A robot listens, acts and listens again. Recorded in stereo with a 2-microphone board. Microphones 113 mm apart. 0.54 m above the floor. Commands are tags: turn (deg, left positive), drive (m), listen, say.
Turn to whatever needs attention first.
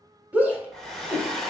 <turn deg="-30"/>
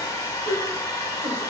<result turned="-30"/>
<turn deg="-135"/>
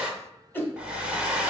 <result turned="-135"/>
<turn deg="20"/>
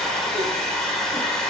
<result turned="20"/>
<listen/>
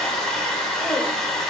<listen/>
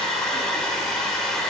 <say>I heard a shout from this way, but can't make it out now.</say>